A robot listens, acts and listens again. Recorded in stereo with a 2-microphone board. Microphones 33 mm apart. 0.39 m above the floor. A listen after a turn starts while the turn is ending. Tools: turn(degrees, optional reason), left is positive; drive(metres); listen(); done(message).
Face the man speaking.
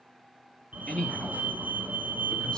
turn(degrees=30, reason="The man speaking: about 30° left or 150° left.")
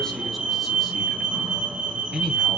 turn(degrees=-10, reason="So it is at 10° right.")
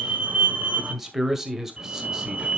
turn(degrees=-15, reason="The man speaking is now 15° right.")
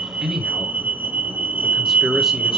turn(degrees=-10, reason="The man speaking is now 10° right.")
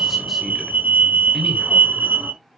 done("Found it: a man speaking, straight ahead.")